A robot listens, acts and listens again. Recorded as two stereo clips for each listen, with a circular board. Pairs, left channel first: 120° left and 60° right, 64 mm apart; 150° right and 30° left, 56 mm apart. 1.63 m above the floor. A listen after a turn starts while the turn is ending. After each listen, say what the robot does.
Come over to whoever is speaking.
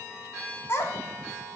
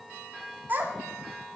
Turn 80° left.
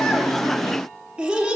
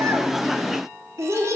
Turn 15° left.
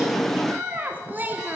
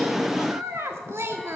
Drive 1.0 m forward.
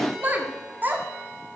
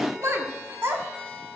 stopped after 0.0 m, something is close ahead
Blocked. The child speaking is further on, straight ahead.